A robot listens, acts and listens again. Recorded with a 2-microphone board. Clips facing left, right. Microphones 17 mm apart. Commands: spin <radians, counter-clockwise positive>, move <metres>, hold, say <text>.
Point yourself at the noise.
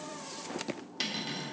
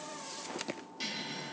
spin 1.05
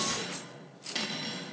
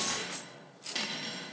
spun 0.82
spin 0.26
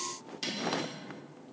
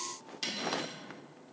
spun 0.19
say Found it: cutlery clinking, straight ahead.